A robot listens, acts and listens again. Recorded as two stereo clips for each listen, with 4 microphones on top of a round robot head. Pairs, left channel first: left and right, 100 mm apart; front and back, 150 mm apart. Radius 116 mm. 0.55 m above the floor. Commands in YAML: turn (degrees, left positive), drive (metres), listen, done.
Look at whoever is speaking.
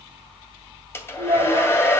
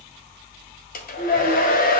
turn: -55
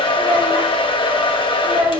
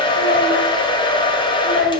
turn: -20
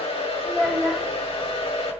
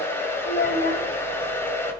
done: "Found it: a child speaking, straight ahead."